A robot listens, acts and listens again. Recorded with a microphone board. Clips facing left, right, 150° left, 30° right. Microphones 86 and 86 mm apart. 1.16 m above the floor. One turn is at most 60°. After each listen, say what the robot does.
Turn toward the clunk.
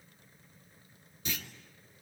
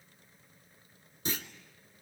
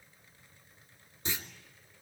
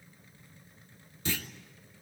Turn 60° right.
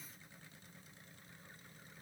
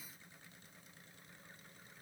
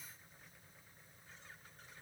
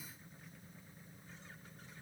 Turn 60° right.
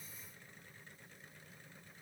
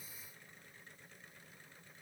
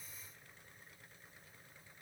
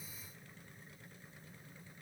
Turn 25° right.
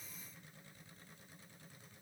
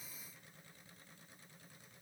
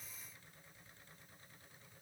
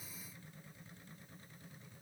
I heard a clunk from this way, but can't make it out now.